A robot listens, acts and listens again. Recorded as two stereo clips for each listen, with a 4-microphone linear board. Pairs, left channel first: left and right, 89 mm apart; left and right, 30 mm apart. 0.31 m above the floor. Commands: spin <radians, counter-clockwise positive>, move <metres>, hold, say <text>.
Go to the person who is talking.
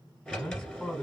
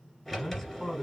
spin 0.35
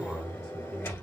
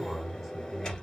move 1.0
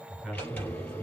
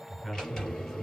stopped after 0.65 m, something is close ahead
say Arrived at the man speaking, straight ahead.